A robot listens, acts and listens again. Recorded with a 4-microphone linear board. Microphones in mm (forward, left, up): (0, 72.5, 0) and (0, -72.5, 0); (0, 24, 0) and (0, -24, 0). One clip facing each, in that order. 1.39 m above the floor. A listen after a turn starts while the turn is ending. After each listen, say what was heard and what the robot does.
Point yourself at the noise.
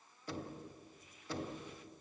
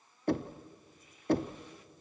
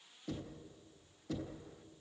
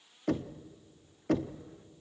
The knocking: about 55° right or 125° right. Turn 55° right.
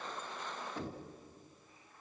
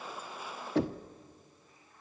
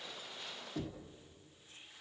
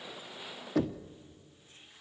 So it is at 70° right. Turn 70° right.
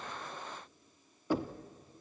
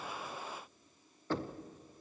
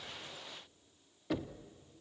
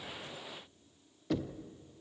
The knocking is now 10° left. Turn 10° left.
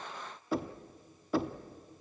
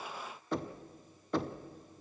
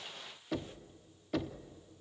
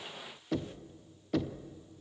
Facing the knocking.